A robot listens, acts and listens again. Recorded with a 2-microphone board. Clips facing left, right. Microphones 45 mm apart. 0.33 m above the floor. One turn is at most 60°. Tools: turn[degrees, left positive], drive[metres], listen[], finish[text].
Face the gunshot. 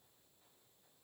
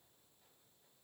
Action: listen[]
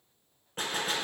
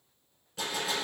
Thought: The gunshot: about 45° left or 135° left.
Action: turn[45]
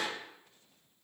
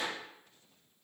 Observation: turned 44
Thought: So it is at 95° left.
Action: turn[60]
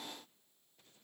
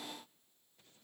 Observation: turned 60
Thought: Nothing new. It was at 35° left.
Action: turn[35]
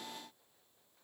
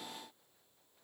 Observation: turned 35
Action: finish[Facing where the gunshot came from. I can't hear it now.]